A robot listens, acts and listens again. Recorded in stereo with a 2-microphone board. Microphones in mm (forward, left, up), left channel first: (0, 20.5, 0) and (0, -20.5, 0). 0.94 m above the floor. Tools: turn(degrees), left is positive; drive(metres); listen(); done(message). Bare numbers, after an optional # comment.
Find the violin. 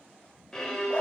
turn(30)
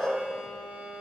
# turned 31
# So it is at 25° right.
turn(-25)
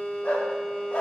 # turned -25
done("Facing the violin, 1 to 2 m away.")